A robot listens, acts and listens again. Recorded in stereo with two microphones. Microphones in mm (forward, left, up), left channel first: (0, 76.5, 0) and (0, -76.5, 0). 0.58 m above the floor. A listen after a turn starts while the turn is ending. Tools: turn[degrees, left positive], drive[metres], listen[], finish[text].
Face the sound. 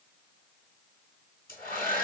Action: turn[90]
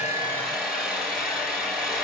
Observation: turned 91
Action: finish[Facing the hair dryer.]